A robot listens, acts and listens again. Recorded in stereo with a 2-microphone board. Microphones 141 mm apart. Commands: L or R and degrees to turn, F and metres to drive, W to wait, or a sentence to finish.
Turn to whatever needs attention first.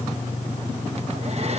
W
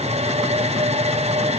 W
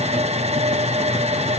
I can't make out anything urgent, only a hair dryer.